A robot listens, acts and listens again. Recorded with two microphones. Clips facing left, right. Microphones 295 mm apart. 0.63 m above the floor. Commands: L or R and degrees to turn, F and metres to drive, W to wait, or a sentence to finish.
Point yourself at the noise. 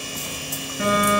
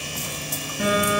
L30
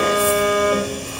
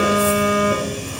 R25
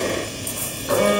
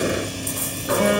Found it: a phone buzzing, straight ahead, 2 to 4 m away.